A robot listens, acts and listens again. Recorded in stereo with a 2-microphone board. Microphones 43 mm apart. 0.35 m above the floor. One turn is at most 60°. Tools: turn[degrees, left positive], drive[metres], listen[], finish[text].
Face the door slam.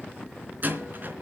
Thought: The door slam: about 45° right or 135° right.
Action: turn[-45]
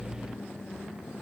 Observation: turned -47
Action: listen[]
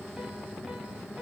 Action: finish[I heard a door slam, but can't make it out now. It was about 5° left or 90° right.]